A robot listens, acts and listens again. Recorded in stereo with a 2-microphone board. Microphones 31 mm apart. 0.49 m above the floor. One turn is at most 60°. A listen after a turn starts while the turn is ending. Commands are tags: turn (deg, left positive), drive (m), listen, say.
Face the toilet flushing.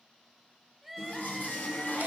<turn deg="60"/>
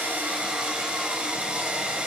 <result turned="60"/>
<turn deg="30"/>
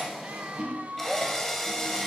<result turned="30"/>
<turn deg="-25"/>
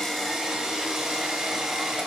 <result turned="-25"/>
<listen/>
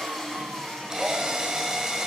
<say>Facing the toilet flushing, 2 to 4 m away.</say>